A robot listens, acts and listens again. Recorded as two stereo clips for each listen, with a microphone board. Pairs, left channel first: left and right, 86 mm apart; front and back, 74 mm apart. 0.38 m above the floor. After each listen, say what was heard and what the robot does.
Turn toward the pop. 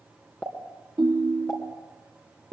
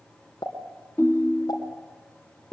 The pop: 15° left. Turn 15° left.
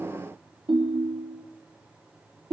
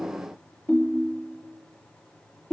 I heard a pop from this way, but can't make it out now.